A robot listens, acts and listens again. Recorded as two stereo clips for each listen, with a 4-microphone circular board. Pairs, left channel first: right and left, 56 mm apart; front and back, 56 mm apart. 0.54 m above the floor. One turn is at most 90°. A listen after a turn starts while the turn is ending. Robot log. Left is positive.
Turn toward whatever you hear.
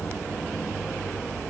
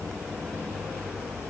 cmd idle
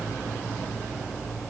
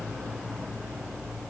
cmd idle
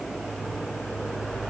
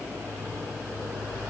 end: I can't make out anything to turn to.